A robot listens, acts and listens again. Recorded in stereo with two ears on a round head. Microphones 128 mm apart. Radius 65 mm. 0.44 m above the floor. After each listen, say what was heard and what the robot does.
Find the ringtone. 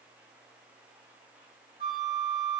Keep listening.
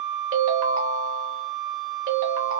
The ringtone: about 60° right or 120° right. Turn 60° right.
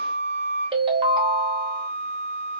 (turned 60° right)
So it is at 40° right. Turn 40° right.
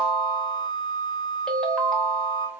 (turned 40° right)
Found it: a ringtone, straight ahead.